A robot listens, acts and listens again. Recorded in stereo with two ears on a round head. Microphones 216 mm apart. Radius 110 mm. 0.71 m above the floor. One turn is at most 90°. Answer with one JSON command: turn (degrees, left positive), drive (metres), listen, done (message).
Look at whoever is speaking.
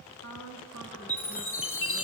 {"turn": 65}
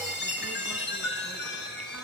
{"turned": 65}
{"listen": true}
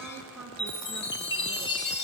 {"done": "Found it: a woman speaking, straight ahead, over 4 m away."}